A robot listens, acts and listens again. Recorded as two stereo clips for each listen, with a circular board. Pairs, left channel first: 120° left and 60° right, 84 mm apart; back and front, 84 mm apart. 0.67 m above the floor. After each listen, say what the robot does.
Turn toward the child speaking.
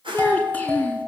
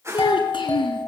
Turn 170° right.
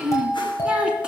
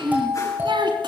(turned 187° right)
Turn 20° left.
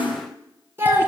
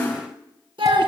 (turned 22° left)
Found it: a child speaking, straight ahead.